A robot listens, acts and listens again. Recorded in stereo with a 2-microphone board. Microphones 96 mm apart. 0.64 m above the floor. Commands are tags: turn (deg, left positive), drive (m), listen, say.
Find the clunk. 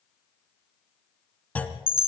<turn deg="15"/>
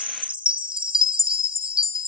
<listen/>
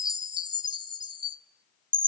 <say>I heard a clunk, but can't make it out now. It was about straight ahead or 150° left.</say>